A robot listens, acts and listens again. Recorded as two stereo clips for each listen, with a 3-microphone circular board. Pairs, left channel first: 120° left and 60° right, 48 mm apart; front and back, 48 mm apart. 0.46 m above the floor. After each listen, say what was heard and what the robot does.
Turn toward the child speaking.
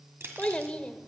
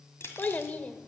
The child speaking: 55° left. Turn 55° left.
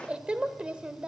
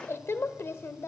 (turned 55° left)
Facing the child speaking, 1 to 2 m away.